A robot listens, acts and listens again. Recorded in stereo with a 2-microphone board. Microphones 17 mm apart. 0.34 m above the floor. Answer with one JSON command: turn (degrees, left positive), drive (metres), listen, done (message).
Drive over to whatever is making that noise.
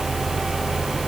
{"listen": true}
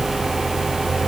{"listen": true}
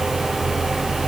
{"done": "I can't make out anything."}